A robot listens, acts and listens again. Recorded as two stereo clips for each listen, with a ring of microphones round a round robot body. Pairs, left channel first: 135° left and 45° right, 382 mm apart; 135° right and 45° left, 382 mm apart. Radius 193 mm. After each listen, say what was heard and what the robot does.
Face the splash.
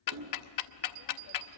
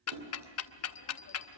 Facing the splash, 2 to 4 m away.